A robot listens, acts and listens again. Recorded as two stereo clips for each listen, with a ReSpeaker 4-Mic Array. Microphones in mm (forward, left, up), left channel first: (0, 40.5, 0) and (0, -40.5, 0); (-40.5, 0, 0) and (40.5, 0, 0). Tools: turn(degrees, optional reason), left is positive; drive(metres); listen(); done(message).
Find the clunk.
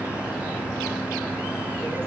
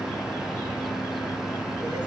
listen()
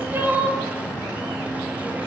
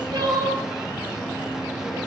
listen()
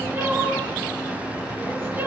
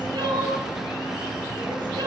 done("I can't make out a clunk, only crying.")